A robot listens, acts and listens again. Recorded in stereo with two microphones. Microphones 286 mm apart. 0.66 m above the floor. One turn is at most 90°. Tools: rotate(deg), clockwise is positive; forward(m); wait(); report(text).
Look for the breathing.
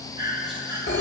rotate(15)
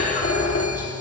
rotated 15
wait()
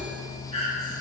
rotate(90)
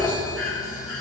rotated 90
rotate(60)
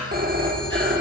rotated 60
wait()
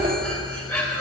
report("Found it: breathing, straight ahead.")